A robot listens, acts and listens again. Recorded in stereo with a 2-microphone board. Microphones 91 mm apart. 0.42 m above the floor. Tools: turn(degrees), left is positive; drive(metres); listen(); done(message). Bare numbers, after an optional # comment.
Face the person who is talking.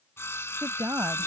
# The woman speaking: about 35° right or 145° right.
turn(-35)
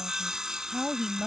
done("Facing the woman speaking.")